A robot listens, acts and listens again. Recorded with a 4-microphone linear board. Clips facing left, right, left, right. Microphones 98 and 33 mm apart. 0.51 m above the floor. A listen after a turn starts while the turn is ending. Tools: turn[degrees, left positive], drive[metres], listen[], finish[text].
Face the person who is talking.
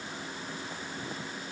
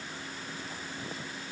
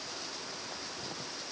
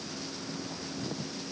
Action: listen[]
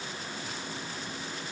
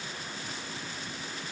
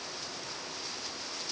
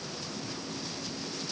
Action: listen[]
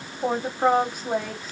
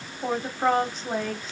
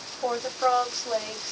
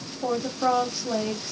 Action: turn[30]
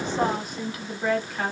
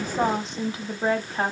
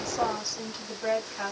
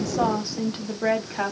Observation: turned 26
Thought: So it is at 35° right.
Action: turn[-35]
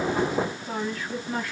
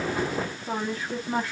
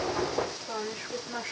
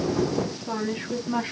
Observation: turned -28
Thought: The woman speaking is now 30° right.
Action: turn[-30]
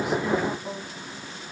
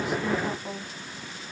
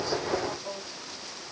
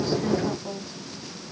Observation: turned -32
Action: finish[Found it: a woman speaking, straight ahead, 1 to 2 m away.]